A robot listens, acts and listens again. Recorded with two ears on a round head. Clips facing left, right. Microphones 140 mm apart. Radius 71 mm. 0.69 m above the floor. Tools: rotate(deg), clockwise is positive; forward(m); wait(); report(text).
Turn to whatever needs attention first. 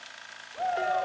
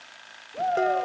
rotate(45)
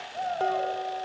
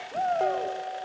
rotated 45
rotate(75)
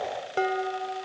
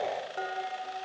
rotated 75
wait()
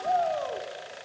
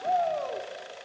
report("Found it: a shout, straight ahead, 2 to 4 m away.")